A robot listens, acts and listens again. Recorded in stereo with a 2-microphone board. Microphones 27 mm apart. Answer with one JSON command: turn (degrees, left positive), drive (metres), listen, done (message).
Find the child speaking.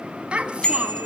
{"turn": -40}
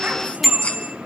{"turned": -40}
{"listen": true}
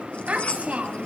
{"turn": -125}
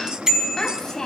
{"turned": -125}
{"turn": 15}
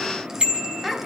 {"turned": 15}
{"turn": -15}
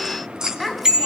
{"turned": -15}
{"done": "Found it: a child speaking, straight ahead, 2 to 4 m away."}